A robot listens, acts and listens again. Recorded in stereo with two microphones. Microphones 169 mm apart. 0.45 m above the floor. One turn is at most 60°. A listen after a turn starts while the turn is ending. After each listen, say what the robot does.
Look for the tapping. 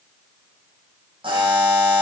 Keep listening.
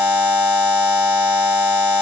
Keep listening.
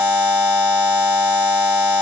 I can't make out tapping, only a buzzer.